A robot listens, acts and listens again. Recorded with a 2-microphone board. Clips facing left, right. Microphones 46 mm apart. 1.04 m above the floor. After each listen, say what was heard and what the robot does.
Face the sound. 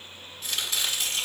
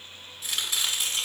Turn 30° right.
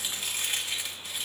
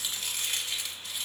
So it is at 20° left. Turn 20° left.
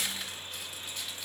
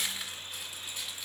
Found it: chopping, straight ahead, 1 to 2 m away.